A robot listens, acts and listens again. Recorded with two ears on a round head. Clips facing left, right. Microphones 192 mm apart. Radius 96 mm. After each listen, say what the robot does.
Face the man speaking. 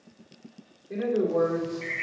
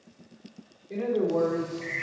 Turn 15° left.
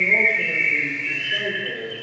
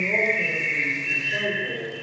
Keep listening.
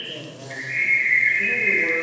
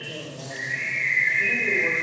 Keep listening.
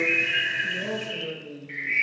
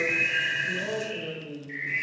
Turn 30° left.
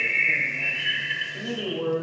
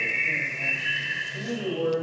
Facing the man speaking.